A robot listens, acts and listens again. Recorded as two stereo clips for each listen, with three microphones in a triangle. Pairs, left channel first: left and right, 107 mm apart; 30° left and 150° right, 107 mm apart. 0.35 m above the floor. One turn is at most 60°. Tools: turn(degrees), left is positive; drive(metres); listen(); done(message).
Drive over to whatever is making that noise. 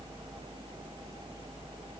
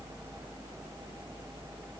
listen()
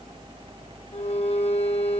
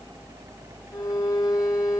turn(degrees=60)
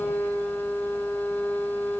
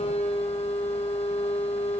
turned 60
turn(degrees=20)
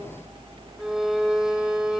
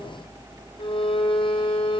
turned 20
drive(metres=1.0)
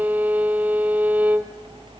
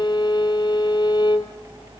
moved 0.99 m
turn(degrees=-15)
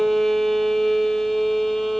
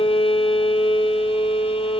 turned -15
drive(metres=1.0)
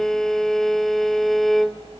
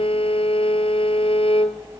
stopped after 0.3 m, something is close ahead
done("Arrived at the violin, straight ahead.")